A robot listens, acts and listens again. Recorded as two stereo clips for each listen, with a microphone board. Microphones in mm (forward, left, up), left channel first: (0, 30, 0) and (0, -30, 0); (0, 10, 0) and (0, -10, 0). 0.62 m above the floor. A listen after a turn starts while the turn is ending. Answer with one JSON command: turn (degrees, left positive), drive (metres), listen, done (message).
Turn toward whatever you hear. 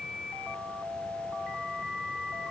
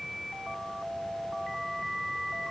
{"listen": true}
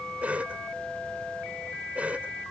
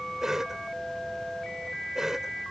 {"turn": -25}
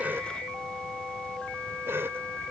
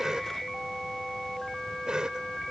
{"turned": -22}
{"turn": -130}
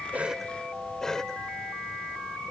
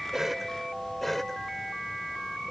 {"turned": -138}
{"turn": 10}
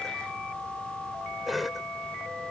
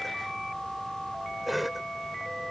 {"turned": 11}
{"done": "Facing the cough."}